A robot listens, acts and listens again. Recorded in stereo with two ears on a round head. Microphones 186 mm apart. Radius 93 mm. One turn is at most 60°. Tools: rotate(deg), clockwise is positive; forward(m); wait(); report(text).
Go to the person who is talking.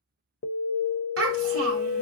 rotate(60)
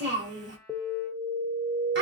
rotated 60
rotate(55)
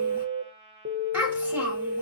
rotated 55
rotate(10)
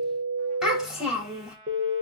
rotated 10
forward(1.0)
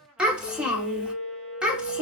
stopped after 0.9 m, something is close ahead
report("Arrived at the child speaking, straight ahead.")